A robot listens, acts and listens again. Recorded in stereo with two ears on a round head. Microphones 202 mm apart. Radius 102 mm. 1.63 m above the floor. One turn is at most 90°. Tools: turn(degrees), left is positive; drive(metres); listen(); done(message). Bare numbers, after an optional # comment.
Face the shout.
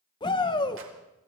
# The shout: about 20° left or 160° left.
turn(20)
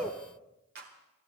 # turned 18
done("Found it: a shout, straight ahead, 1 to 2 m away.")